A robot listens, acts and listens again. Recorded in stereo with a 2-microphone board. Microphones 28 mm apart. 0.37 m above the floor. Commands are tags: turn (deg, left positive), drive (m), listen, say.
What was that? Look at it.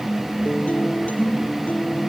<turn deg="65"/>
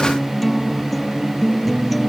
<say>Found it: a guitar, straight ahead.</say>